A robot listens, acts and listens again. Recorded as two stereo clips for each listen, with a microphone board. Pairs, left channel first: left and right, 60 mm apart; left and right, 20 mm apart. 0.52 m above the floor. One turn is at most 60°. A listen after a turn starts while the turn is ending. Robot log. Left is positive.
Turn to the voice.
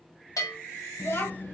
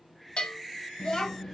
note: The child speaking: about 45° left or 135° left.
cmd yaw +45
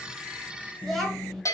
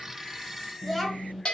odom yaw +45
end: Found it: a child speaking, straight ahead.